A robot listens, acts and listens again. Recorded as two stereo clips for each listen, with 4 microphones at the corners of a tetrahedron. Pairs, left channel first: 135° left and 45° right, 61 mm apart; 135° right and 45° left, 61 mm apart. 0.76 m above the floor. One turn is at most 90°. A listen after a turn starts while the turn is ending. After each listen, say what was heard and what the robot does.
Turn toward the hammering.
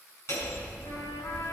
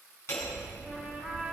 The hammering: straight behind. Turn 90° left.
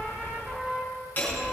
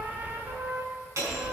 The hammering is now 75° left. Turn 75° left.
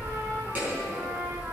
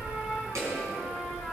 The hammering is now 15° left. Turn 15° left.
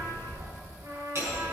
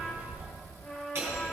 Found it: hammering, straight ahead.